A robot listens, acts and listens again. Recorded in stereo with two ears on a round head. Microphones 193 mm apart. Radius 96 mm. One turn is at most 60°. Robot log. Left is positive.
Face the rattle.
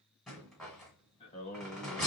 cmd yaw +30
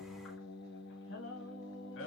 cmd idle
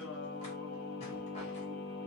cmd idle
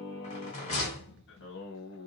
note: So it is at 150° left.
cmd yaw +60
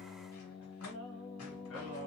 note: Nothing new. It was at 90° left.
cmd yaw +60
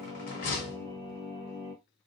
note: The rattle is now 45° left.
cmd yaw +45
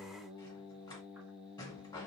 note: The rattle is now 20° left.
cmd yaw +20
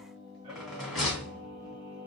end: Facing the rattle.